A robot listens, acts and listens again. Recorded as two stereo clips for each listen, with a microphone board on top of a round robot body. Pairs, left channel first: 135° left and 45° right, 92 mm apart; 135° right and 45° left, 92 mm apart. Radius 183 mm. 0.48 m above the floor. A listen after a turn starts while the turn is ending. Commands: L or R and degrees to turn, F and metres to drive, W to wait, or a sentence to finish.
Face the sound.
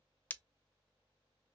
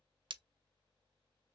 L65
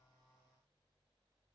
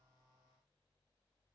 I heard breaking glass from this way, but can't make it out now.